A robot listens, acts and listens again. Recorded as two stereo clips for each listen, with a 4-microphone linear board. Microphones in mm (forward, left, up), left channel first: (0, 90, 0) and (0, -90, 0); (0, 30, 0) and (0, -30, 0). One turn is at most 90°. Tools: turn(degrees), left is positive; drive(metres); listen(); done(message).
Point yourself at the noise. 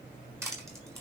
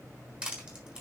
turn(degrees=-15)
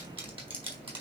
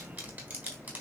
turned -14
turn(degrees=-90)
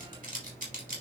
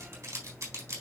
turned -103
turn(degrees=-50)
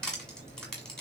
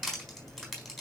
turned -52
done("Found it: crushing, straight ahead.")